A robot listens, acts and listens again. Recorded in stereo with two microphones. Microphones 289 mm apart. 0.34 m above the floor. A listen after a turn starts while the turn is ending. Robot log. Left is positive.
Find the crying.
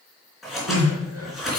note: The crying: about 60° right or 120° right.
cmd yaw -60
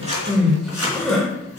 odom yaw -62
end: Found it: crying, straight ahead, 2 to 4 m away.